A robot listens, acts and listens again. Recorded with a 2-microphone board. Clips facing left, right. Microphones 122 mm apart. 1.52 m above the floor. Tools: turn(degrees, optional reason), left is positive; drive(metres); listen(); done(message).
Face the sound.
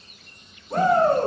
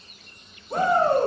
turn(degrees=30)
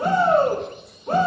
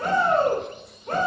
turn(degrees=155, reason="So it is at 155° left.")
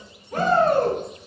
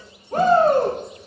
turn(degrees=-40, reason="The shout is now 40° right.")
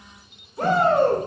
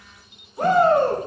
turn(degrees=-10, reason="The shout is now 10° right.")
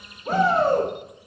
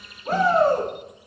done("Facing the shout, 2 to 4 m away.")